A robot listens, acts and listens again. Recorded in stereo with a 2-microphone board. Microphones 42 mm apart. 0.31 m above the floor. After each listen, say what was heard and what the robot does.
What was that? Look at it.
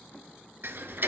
The ticking: about 60° right or 120° right. Turn 60° right.
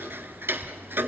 So it is at 60° right. Turn 60° right.
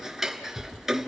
The ticking is now 10° right. Turn 10° right.
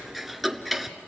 Facing the ticking.